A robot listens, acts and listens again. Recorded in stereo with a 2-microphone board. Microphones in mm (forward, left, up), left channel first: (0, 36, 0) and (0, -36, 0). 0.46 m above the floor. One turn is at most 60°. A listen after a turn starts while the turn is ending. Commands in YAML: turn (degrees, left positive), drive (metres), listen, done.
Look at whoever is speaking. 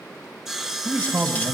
turn: -45
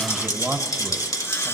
turn: -10
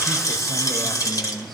done: "Found it: a man speaking, straight ahead."